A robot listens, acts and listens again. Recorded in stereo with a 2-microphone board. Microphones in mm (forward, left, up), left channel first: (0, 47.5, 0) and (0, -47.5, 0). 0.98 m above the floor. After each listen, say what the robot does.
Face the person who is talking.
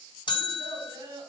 Turn 50° right.
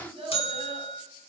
Turn 85° right.
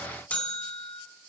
Keep listening.
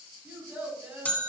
Turn 20° right.
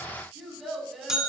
Facing the child speaking.